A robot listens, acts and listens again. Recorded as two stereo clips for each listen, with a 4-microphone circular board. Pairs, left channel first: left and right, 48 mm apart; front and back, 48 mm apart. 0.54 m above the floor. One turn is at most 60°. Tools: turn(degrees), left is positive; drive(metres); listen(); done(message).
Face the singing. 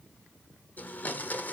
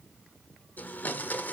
listen()
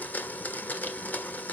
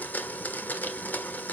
listen()
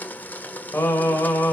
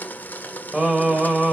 turn(degrees=60)
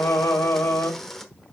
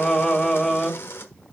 turn(degrees=60)
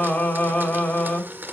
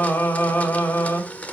turn(degrees=35)
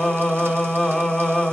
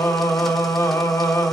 done("Found it: singing, straight ahead, 2 to 4 m away.")